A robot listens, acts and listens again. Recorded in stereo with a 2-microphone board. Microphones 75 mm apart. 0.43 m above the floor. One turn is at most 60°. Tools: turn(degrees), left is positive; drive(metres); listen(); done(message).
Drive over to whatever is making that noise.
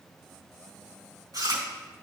turn(degrees=-60)
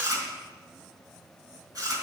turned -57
turn(degrees=-55)
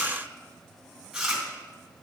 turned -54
drive(metres=1.0)
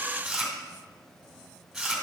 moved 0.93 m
drive(metres=1.0)
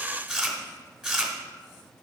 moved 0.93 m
turn(degrees=-10)
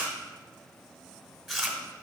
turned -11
drive(metres=1.0)
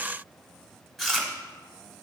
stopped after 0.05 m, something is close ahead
done("Arrived at the chewing, straight ahead.")